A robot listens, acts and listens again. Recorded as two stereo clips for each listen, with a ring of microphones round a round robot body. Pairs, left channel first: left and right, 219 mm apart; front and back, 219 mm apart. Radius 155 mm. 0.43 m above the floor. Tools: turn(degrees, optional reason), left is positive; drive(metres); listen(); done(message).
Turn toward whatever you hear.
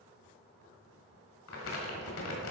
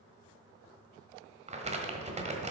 turn(degrees=120, reason="The crumpling: 120° left.")
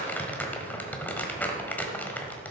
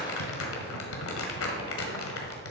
done("Facing the crumpling, 1 to 2 m away.")